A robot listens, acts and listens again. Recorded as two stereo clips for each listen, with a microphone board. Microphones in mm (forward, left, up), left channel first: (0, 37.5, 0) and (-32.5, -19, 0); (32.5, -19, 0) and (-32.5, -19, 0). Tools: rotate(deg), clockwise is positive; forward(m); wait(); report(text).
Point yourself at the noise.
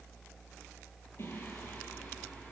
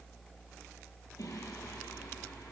rotate(-10)
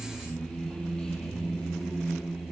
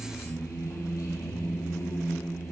rotate(30)
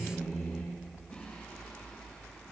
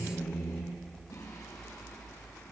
report("Found it: singing, straight ahead.")